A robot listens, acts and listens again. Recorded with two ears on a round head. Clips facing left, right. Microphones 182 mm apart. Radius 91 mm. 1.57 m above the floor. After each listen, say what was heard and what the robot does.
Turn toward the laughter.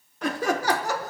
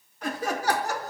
The laughter: about 65° left or 115° left. Turn 65° left.
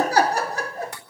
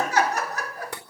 So it is at 20° left. Turn 20° left.
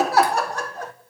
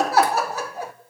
The laughter is now 10° right. Turn 10° right.
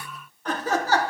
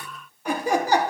The laughter is now 15° right. Turn 15° right.
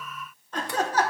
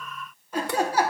The laughter is now 10° right. Turn 10° right.
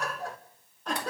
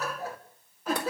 Facing the laughter, 2 to 4 m away.